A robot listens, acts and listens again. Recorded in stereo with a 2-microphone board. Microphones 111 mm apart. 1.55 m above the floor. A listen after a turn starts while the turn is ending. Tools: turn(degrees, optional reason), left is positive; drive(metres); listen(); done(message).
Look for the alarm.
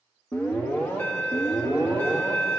turn(degrees=20, reason="The alarm: about 20° left or 160° left.")
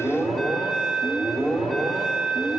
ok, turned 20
done("Facing the alarm.")